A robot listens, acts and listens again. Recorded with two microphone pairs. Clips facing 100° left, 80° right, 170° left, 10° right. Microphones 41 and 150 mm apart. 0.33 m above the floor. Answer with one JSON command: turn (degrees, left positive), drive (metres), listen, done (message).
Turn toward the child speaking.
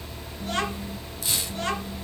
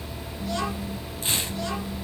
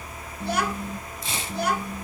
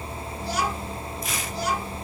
{"turn": 140}
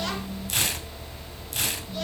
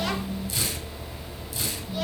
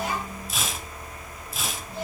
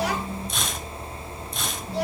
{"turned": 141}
{"done": "Found it: a child speaking, straight ahead, 2 to 4 m away."}